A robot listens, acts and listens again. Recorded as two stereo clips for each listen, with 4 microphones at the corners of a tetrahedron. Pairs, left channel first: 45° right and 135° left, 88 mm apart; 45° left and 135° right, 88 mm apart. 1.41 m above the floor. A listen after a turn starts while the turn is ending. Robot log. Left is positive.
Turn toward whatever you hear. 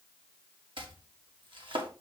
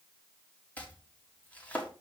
note: The chopping: 115° left.
cmd yaw +115
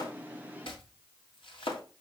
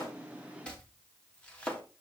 note: The chopping is now 35° right.
cmd yaw -35
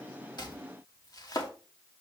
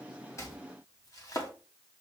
end: Found it: chopping, straight ahead, 1 to 2 m away.